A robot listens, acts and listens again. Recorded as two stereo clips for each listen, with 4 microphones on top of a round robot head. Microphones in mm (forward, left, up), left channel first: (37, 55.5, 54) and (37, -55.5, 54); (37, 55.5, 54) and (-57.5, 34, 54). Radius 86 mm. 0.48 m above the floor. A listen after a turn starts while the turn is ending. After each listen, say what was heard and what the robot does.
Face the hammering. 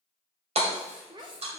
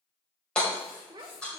The hammering: 70° right. Turn 70° right.
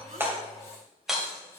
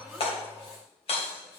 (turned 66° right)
Found it: hammering, straight ahead.